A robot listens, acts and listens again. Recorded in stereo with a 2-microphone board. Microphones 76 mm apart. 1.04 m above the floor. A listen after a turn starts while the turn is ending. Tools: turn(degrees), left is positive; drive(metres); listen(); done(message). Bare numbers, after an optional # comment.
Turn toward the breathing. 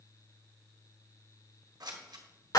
listen()
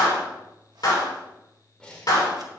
turn(30)
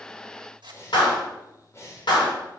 # So it is at 135° left.
turn(135)
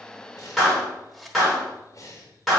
# The breathing is now 45° left.
turn(45)
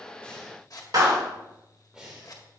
# The breathing is now 10° right.
turn(-10)
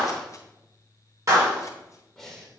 done("Found it: breathing, straight ahead, 2 to 4 m away.")